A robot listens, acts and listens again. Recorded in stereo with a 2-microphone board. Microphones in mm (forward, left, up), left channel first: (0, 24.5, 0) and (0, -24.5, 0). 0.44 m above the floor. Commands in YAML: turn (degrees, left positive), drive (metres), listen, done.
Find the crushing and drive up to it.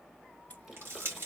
turn: -50
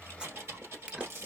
turn: -70
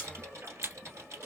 turn: -20
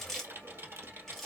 drive: 1.0
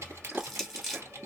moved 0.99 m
drive: 1.0
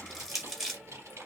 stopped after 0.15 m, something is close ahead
done: "Arrived at the crushing, straight ahead."